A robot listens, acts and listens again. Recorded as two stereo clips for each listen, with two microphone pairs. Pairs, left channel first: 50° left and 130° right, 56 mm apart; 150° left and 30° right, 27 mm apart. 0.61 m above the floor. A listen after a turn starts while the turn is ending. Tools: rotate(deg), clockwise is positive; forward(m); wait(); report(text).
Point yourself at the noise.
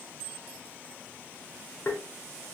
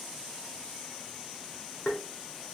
rotate(-105)
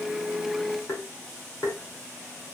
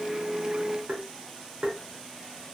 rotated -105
rotate(-20)
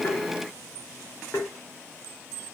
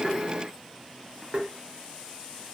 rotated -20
report("Found it: tapping, straight ahead.")